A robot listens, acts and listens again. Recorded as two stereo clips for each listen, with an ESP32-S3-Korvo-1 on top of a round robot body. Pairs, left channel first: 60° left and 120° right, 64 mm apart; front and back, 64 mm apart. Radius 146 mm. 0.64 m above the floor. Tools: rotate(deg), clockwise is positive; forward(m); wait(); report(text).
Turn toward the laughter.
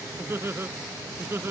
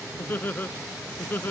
rotate(60)
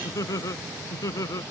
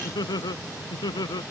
rotate(-20)
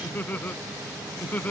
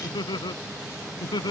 report("Facing the laughter.")